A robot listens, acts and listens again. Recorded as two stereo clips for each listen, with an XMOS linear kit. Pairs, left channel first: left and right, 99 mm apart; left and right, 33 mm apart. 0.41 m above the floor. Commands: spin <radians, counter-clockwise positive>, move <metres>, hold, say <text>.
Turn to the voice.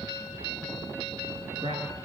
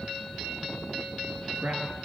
spin -1.31
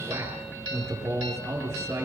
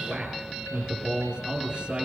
spin -0.52
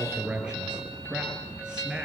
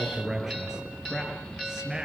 spin -0.17
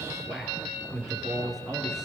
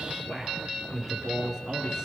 say Facing the man speaking, over 4 m away.